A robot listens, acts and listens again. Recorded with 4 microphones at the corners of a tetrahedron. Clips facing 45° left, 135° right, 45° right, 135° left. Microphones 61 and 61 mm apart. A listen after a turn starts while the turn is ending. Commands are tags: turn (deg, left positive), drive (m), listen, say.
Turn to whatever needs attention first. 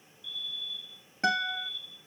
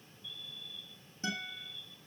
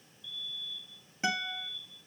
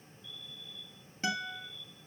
<turn deg="-175"/>
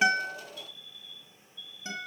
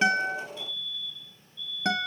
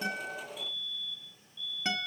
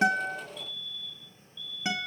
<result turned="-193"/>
<turn deg="20"/>
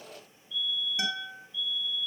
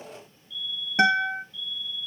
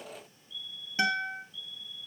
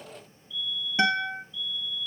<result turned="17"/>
<say>Found it: a fire alarm, straight ahead, over 4 m away.</say>